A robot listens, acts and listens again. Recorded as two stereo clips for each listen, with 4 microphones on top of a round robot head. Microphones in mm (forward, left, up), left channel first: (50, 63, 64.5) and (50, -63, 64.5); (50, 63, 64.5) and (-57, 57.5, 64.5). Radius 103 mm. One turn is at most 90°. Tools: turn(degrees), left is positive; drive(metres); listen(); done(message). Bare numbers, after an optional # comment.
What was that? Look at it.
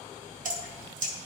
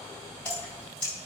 # The dripping: 80° right.
turn(-80)
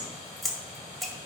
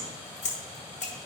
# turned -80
done("Facing the dripping.")